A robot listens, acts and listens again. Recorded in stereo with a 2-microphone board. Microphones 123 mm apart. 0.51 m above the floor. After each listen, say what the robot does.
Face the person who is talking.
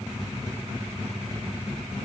Keep listening.
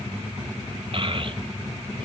Turn 45° right.
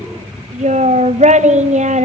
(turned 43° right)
Turn 90° right.
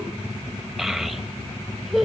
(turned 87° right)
Facing the child speaking.